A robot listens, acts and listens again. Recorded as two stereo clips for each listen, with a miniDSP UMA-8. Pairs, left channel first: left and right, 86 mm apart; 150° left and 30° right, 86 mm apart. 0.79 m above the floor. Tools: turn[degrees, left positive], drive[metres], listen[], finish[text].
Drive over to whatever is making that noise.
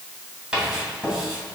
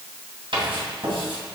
Thought: The writing: 15° right.
Action: turn[-15]
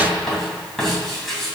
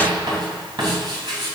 Action: drive[1.0]
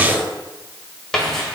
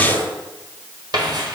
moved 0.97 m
Action: drive[1.0]
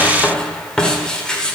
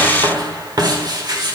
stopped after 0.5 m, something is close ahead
Thought: The writing is now 10° left.
Action: turn[10]
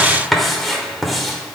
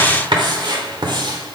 Action: finish[I am next to the writing.]